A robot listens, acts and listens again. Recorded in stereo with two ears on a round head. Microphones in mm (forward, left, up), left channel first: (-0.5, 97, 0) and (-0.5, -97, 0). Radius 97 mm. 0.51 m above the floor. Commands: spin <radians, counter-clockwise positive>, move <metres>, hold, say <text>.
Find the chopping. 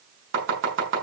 spin -1.05
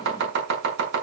spin -0.96
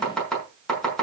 say Facing the chopping, over 4 m away.